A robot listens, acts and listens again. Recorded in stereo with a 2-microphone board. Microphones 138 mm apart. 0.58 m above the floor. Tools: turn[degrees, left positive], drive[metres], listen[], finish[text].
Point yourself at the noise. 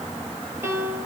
Thought: The piano: about 20° right or 160° right.
Action: turn[-20]
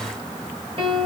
Thought: So it is at 140° right.
Action: turn[-140]
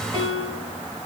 Thought: The piano is now 45° right.
Action: turn[-45]
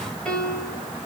Action: finish[Facing the piano, 2 to 4 m away.]